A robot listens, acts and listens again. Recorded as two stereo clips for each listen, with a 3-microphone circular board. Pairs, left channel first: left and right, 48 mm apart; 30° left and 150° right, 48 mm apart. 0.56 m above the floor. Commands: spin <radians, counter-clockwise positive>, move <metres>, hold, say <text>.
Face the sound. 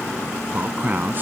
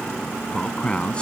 spin -0.70
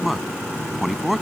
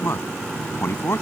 say Found it: a man speaking, straight ahead.